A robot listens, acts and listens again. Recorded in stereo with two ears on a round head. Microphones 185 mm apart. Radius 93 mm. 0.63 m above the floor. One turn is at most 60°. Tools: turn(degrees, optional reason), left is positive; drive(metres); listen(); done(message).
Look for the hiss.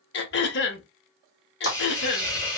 turn(degrees=20, reason="The hiss: about 20° left or 160° left.")
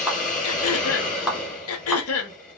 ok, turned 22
turn(degrees=60, reason="So it is at 140° left.")
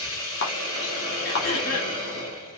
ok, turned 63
turn(degrees=60, reason="The hiss is now 75° left.")
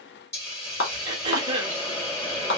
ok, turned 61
turn(degrees=15, reason="The hiss is now 15° left.")
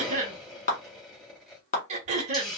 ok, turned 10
done("Found it: a hiss, straight ahead.")